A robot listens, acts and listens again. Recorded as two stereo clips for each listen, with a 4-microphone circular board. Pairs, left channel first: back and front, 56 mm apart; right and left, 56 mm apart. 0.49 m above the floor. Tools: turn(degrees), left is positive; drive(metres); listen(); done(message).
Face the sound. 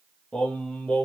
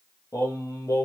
turn(degrees=-110)
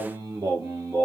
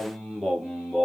turn(degrees=-10)
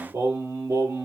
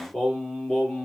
turn(degrees=-10)
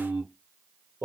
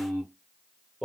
done("Found it: singing, straight ahead, 2 to 4 m away.")